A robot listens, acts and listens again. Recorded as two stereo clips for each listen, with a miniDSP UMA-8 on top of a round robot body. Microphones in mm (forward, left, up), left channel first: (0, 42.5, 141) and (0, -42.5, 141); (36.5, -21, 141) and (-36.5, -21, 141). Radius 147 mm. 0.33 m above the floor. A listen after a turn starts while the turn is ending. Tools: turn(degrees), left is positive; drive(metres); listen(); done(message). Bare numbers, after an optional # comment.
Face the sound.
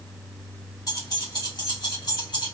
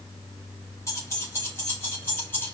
# The keys jangling: 60° left.
turn(60)
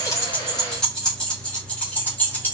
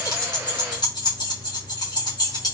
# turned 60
# The keys jangling is now 25° left.
turn(25)
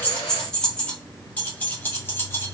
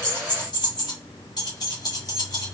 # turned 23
# The keys jangling is now 25° left.
turn(25)
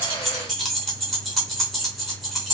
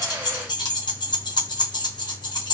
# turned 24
done("Facing the keys jangling.")